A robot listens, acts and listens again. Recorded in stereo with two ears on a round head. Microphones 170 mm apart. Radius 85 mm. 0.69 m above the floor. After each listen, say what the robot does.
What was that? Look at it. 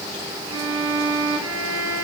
Turn 90° right.
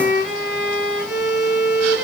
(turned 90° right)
Found it: a violin, straight ahead, 2 to 4 m away.